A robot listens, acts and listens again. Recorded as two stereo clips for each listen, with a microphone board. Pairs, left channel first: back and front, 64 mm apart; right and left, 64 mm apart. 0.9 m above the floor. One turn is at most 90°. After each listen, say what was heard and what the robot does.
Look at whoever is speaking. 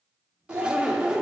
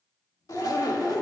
The child speaking: 45° right. Turn 45° right.
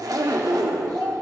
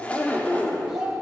The child speaking is now 10° left. Turn 10° left.
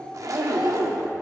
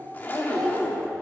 Keep listening.
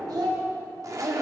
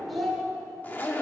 Facing the child speaking.